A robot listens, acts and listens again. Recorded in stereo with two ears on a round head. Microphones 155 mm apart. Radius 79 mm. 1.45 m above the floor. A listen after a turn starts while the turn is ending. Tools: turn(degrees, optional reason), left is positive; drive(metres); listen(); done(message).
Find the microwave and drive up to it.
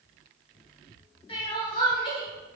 listen()
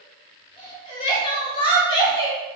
listen()
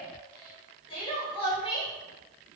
done("I can't make out a microwave to turn to.")